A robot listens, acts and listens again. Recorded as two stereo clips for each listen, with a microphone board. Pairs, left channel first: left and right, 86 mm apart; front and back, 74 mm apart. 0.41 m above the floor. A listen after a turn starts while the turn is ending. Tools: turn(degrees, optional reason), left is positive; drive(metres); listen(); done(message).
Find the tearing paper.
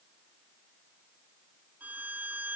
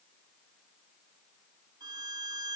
listen()
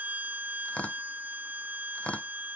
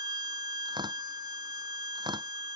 turn(degrees=165, reason="The tearing paper: 165° left.")
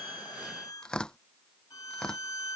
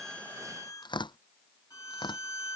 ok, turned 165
turn(degrees=10, reason="The tearing paper is now 10° left.")
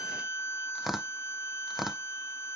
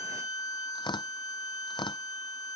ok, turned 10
done("Found it: tearing paper, straight ahead.")